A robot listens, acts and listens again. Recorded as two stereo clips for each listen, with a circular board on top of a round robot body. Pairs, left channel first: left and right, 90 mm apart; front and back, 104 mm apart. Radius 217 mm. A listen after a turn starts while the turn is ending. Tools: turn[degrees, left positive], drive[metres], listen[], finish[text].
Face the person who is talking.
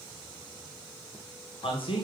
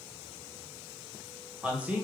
Thought: The man speaking: 105° left.
Action: turn[105]
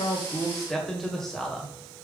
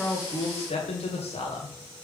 Action: finish[Found it: a man speaking, straight ahead.]